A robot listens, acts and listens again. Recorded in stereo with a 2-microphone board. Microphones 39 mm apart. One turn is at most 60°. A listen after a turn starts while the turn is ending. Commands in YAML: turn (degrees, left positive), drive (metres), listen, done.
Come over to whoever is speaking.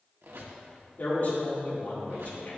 turn: 50
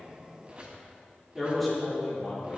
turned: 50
drive: 1.0
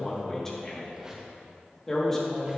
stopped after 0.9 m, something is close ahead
turn: 15
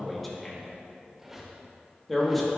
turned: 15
done: "Arrived at the man speaking, straight ahead."